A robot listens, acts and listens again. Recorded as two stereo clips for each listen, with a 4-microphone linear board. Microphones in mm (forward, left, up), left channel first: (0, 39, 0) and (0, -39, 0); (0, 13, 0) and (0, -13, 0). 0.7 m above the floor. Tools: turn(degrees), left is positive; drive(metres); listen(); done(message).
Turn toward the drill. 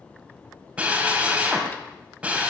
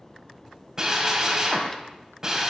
turn(degrees=-20)
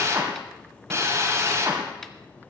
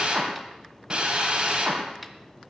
turn(degrees=-140)
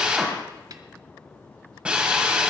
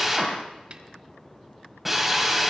turn(degrees=-15)
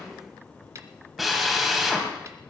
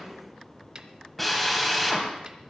done("Found it: a drill, straight ahead.")